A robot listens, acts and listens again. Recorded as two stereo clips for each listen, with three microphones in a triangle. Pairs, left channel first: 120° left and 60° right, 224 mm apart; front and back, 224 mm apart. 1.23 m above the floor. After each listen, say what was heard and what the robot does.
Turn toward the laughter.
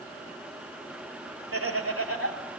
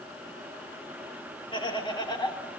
The laughter: 70° right. Turn 70° right.
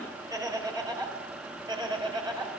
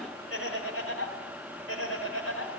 The laughter is now 10° left. Turn 10° left.
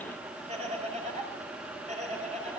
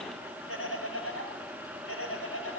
Found it: laughter, straight ahead, over 4 m away.